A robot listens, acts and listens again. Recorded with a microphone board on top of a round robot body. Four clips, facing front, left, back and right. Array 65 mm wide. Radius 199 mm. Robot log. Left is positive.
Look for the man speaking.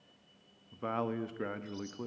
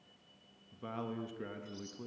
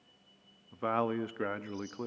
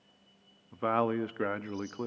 note: The man speaking: 115° right.
cmd yaw -115
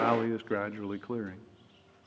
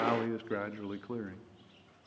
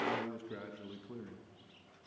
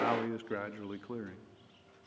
note: The man speaking is now 10° left.
cmd yaw +10
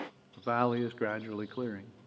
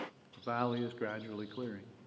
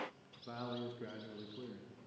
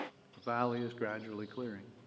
end: Facing the man speaking.